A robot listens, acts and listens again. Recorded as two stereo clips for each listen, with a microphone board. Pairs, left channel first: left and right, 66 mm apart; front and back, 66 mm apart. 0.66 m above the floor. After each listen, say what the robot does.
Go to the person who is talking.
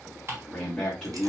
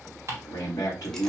Turn 10° left.
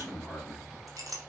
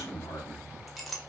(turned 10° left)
Drive 1.0 m forward.
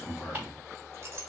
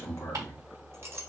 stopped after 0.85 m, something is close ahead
Turn 10° left.
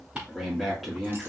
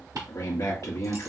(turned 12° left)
Arrived at the man speaking, straight ahead.